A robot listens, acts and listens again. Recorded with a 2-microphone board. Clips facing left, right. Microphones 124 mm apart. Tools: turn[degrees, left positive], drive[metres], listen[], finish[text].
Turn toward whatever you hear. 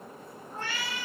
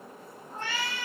Thought: The cat meowing: about 25° right or 155° right.
Action: turn[-25]
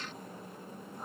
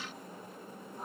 Action: finish[Found it: a cat meowing, straight ahead, 2 to 4 m away.]